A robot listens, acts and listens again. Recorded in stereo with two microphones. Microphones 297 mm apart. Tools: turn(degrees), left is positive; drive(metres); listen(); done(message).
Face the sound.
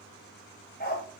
turn(degrees=30)
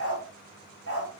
turn(degrees=135)
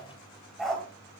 done("Facing the dog barking, 2 to 4 m away.")